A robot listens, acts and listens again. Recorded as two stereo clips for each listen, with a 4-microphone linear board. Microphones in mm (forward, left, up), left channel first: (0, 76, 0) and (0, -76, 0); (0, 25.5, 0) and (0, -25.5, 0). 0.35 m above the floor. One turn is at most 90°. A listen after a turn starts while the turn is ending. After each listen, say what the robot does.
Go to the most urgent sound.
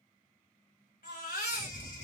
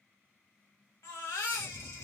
Turn 90° left.
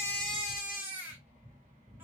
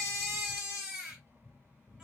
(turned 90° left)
Turn 10° right.
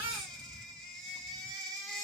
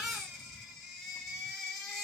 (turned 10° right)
Drive 1.0 m forward.
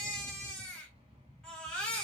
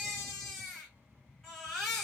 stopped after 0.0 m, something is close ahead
Blocked. The baby crying is further on, straight ahead.